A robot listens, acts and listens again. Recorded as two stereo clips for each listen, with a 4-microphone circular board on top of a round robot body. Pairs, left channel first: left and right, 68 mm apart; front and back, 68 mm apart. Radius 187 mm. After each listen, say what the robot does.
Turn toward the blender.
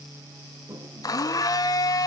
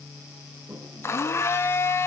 Turn 55° left.
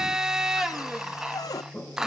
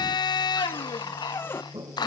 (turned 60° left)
Found it: a blender, straight ahead, 1 to 2 m away.